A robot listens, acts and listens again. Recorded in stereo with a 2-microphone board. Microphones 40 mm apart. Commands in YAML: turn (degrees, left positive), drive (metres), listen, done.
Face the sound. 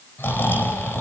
turn: 70
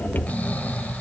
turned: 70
turn: 40
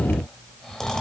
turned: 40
turn: 15
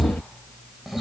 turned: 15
done: "Facing the snoring."